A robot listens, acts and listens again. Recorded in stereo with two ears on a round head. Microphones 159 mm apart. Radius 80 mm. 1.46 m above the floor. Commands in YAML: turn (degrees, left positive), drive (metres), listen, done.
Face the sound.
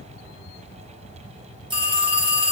turn: -25
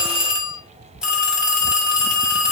done: "Facing the phone ringing."